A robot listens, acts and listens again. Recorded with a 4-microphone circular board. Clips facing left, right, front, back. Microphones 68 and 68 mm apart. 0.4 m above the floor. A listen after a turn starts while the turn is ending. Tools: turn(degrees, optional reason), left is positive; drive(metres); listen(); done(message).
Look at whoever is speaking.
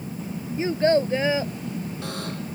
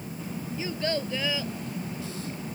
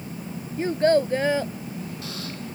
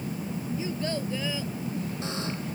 turn(degrees=35, reason="The child speaking: 35° left.")
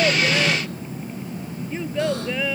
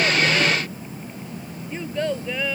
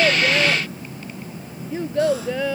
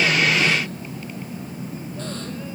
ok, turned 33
done("Facing the child speaking.")